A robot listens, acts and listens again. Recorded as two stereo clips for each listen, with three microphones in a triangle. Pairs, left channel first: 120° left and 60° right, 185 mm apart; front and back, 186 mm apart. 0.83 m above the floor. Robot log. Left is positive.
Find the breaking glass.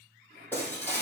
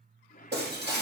note: The breaking glass: 160° right.
cmd yaw -160
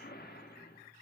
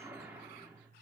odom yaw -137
note: Nothing new. It was at 25° right.
cmd yaw -25
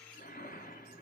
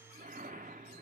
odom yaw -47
note: Nothing new. It was at 20° left.
cmd yaw +20
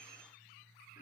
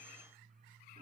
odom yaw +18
end: Facing where the breaking glass came from. I can't hear it now.